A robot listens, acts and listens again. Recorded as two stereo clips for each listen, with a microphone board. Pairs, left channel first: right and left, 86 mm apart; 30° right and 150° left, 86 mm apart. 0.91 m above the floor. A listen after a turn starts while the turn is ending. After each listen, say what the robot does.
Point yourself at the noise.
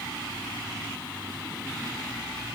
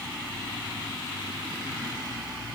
Keep listening.
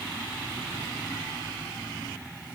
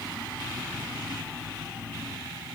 Keep listening.
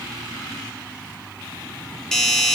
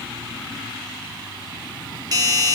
Turn 170° right.
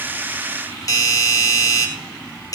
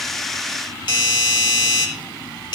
Turn 45° right.
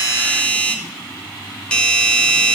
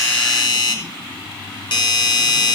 Turn 10° right.
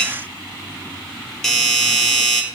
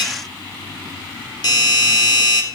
Facing the doorbell, 2 to 4 m away.